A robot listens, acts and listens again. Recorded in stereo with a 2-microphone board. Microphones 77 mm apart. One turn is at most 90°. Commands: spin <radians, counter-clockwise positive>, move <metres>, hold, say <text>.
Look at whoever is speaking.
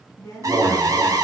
spin 0.70
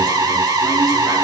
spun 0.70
hold
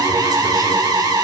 hold
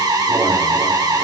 say I heard a woman speaking, but can't make it out now. It was about straight ahead or 100° left.